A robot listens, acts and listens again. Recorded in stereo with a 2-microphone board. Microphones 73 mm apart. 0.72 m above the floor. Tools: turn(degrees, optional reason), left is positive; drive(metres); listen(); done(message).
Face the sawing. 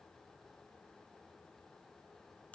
listen()
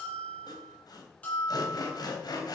turn(degrees=65, reason="The sawing: about 65° left or 115° left.")
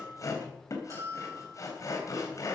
turn(degrees=50, reason="So it is at 50° left.")
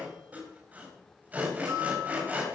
turn(degrees=-20, reason="The sawing is now 20° right.")
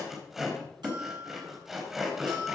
done("Found it: sawing, straight ahead, 2 to 4 m away.")